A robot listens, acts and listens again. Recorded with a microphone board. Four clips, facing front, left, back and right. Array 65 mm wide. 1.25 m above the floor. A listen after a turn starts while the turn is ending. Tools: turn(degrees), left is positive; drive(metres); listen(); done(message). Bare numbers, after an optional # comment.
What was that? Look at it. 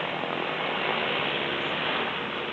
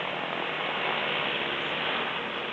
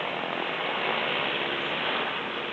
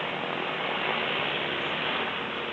listen()
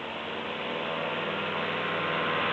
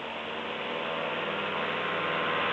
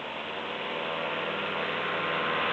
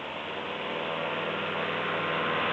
listen()
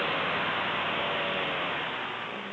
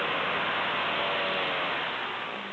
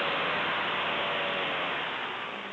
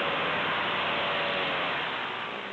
done("I can't make out anything.")